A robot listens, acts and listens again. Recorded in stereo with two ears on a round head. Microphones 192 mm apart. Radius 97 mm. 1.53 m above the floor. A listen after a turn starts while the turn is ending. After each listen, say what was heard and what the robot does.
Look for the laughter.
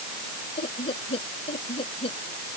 The laughter: about 25° left or 155° left. Turn 25° left.
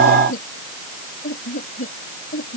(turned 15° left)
The laughter: about 40° left or 140° left. Turn 40° left.
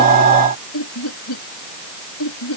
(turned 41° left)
So it is at 100° left. Turn 100° left.
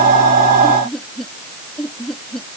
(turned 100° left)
Found it: laughter, straight ahead.